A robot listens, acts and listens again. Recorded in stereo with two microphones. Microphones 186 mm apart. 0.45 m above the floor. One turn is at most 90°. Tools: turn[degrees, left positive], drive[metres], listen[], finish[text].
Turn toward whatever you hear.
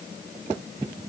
Action: listen[]
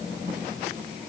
Action: listen[]
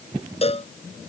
Thought: The cowbell: about 35° left or 145° left.
Action: turn[35]
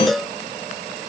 Action: finish[Facing the cowbell.]